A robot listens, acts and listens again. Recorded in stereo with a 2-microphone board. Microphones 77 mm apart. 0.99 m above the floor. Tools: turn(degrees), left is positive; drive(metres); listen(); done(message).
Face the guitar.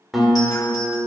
turn(degrees=30)
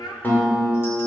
turn(degrees=155)
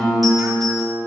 turn(degrees=10)
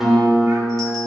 done("Found it: a guitar, straight ahead.")